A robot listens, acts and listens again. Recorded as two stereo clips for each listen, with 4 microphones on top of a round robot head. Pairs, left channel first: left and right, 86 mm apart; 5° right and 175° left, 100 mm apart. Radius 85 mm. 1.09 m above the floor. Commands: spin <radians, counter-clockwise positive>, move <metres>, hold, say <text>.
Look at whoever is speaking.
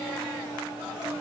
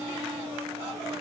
hold
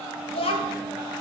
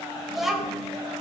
spin 1.57
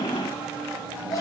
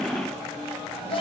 spin 0.44
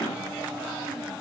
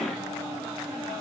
hold
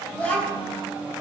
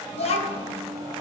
spin 0.17
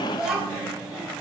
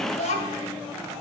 say Found it: a child speaking, straight ahead.